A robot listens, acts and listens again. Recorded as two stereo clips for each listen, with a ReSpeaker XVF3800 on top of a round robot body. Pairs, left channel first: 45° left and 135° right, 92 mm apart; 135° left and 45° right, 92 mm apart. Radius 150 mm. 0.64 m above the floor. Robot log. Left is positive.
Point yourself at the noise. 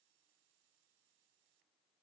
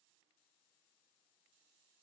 cmd idle
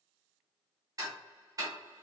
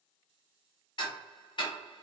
note: The ticking: 175° left.
cmd yaw +175
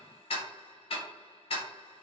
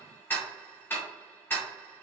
note: The ticking is now 65° left.
cmd yaw +65
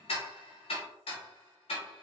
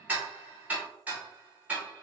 note: The ticking is now 30° left.
cmd yaw +30
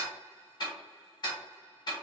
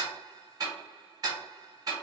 end: Found it: ticking, straight ahead, under 1 m away.